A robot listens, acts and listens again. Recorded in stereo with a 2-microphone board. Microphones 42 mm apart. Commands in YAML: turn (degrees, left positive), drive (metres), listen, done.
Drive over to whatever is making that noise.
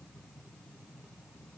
listen: true
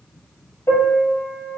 turn: 90
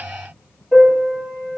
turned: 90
drive: 1.0
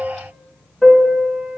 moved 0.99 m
drive: 1.0
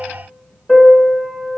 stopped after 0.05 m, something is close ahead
done: "Arrived at the piano, straight ahead."